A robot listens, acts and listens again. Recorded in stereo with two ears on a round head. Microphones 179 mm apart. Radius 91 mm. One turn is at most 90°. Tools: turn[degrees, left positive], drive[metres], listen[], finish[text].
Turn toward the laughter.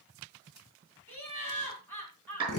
Action: turn[30]
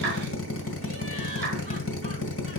Action: listen[]
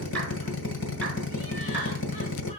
Action: listen[]
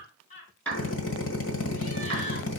Thought: So it is at 140° left.
Action: turn[90]
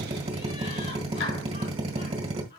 Thought: The laughter is now 50° left.
Action: turn[50]
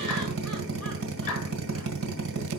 Action: listen[]
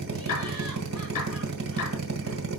Action: listen[]
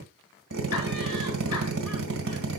Action: finish[Facing where the laughter came from. I can't hear it now.]